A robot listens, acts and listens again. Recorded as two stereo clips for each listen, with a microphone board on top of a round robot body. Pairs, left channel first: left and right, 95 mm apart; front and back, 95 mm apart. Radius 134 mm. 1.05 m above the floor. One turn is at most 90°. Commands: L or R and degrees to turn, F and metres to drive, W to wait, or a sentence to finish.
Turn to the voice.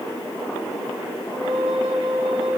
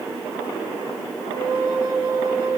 W
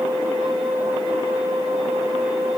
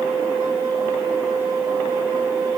W
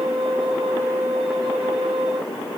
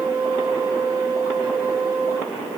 I can't make out anyone speaking, only a flute.